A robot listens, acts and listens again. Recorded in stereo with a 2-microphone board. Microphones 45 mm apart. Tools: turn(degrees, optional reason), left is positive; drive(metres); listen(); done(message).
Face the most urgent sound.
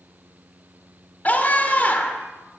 turn(degrees=40, reason="The scream: about 40° left or 140° left.")
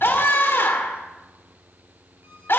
turn(degrees=100, reason="So it is at 100° left.")
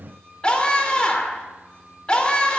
turn(degrees=25, reason="The scream is now 25° left.")
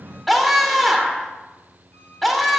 done("Found it: a scream, straight ahead.")